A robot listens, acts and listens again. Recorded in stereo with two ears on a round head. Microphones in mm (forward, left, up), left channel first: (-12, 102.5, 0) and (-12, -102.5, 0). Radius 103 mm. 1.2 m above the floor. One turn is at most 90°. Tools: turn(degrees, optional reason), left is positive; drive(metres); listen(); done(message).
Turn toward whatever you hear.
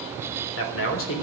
turn(degrees=65, reason="The man speaking: about 65° left or 115° left.")
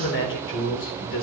turn(degrees=55, reason="So it is at 55° left.")
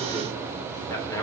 turn(degrees=15, reason="The man speaking is now 15° left.")
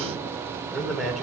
done("Found it: a man speaking, straight ahead, 2 to 4 m away.")